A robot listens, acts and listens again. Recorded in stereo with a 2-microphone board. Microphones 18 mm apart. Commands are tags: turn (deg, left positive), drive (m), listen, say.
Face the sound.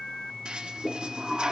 <turn deg="-65"/>
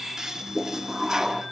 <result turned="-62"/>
<turn deg="-35"/>
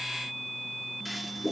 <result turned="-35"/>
<say>Found it: a toilet flushing, straight ahead, under 1 m away.</say>